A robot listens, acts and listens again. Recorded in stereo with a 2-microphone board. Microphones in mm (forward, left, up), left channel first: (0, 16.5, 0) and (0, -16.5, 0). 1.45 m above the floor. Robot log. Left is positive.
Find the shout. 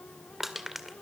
cmd idle
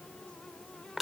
cmd idle
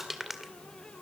end: I can't make out a shout to turn to.